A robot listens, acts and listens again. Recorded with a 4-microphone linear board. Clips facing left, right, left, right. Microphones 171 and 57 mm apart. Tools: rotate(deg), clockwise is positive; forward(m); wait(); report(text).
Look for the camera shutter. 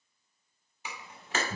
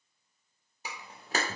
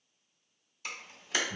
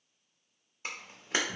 rotate(35)
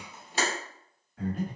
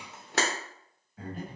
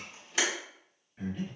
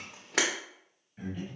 rotate(110)
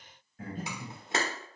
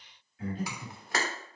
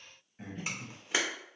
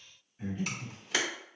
rotate(-25)
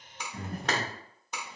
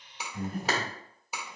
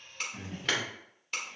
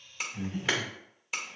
report("Found it: a camera shutter, straight ahead, under 1 m away.")